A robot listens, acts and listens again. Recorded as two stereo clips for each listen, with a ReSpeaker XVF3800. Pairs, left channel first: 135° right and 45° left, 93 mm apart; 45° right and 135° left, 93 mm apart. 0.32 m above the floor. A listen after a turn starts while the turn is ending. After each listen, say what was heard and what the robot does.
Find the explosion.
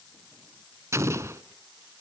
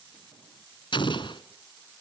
The explosion: 15° right. Turn 15° right.
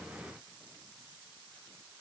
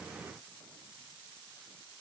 I heard an explosion from this way, but can't make it out now.